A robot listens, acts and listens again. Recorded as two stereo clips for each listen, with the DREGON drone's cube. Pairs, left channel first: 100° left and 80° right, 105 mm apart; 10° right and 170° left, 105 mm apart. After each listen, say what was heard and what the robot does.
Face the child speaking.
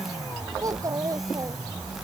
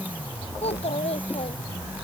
The child speaking: 25° right. Turn 25° right.
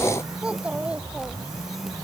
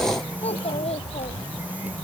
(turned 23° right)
Found it: a child speaking, straight ahead.